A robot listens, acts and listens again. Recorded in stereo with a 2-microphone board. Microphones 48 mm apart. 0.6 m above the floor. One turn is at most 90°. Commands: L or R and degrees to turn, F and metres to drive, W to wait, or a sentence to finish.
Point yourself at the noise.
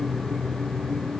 W
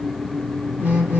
R25
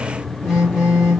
Found it: a phone buzzing, straight ahead.